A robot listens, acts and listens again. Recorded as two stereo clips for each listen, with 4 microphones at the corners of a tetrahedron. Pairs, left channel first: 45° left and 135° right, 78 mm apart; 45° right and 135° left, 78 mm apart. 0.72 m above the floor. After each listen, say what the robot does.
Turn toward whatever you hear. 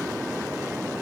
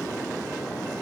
Keep listening.
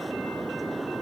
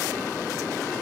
Keep listening.
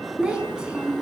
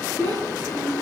Turn 145° left.
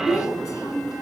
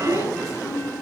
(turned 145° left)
Facing the child speaking.